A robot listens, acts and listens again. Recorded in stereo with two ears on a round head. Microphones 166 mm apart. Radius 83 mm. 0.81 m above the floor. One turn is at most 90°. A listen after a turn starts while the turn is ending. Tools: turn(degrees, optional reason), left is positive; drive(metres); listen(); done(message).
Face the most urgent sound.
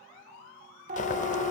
turn(degrees=-40, reason="The siren: about 40° right or 140° right.")
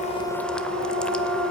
turn(degrees=-90, reason="So it is at 95° right.")
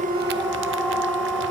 done("Facing the siren.")